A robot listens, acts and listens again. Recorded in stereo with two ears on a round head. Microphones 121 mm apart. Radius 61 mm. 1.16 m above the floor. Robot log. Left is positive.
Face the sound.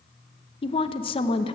note: The woman speaking: about 40° left or 140° left.
cmd yaw +40
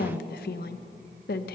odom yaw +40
note: So it is at 100° left.
cmd yaw +100
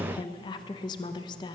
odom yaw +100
note: The woman speaking is now 30° left.
cmd yaw +30
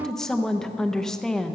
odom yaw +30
end: Found it: a woman speaking, straight ahead.